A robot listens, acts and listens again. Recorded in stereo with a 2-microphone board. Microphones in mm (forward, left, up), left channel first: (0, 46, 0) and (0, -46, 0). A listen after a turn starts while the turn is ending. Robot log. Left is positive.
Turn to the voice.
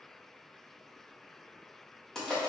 cmd idle
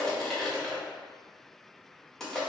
cmd idle
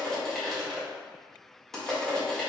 end: I can't make out anyone speaking, only crushing.